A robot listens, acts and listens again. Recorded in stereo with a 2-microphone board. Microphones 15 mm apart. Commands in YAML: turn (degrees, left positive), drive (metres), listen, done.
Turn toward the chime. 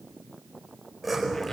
listen: true
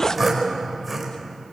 listen: true
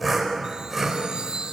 turn: -90
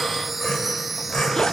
done: "Found it: a chime, straight ahead, 1 to 2 m away."